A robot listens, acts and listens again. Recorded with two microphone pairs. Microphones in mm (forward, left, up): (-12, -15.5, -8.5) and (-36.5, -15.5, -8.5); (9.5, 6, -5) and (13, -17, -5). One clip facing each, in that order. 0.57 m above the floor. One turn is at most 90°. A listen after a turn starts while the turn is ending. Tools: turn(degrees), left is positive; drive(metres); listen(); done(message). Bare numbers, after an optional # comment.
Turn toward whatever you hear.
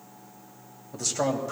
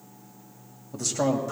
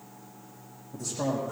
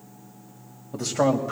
# The man speaking: 90° right.
turn(-90)
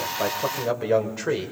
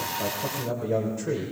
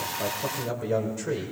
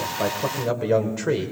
# The man speaking is now 40° right.
turn(-40)
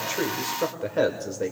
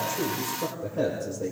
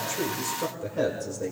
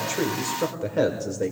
# The man speaking is now 35° right.
turn(-35)
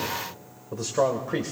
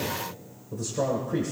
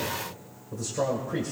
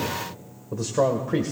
# The man speaking is now 45° right.
turn(-45)
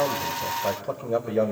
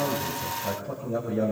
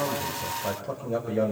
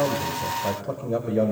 done("Facing the man speaking.")